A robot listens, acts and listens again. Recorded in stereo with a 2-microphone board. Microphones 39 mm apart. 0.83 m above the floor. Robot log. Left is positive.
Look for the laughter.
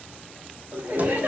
note: The laughter: about 55° right or 125° right.
cmd yaw -55
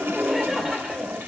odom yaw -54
note: So it is at 15° right.
cmd yaw -15
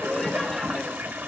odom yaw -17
end: Found it: laughter, straight ahead.